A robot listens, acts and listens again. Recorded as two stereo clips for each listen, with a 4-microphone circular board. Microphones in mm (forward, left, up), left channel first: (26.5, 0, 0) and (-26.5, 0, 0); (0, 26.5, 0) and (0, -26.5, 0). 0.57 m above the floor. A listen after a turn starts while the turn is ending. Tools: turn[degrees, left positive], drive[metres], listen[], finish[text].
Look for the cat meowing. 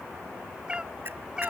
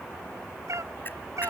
Thought: The cat meowing: 105° right.
Action: turn[-105]
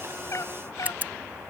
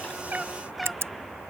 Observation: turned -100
Action: finish[Found it: a cat meowing, straight ahead.]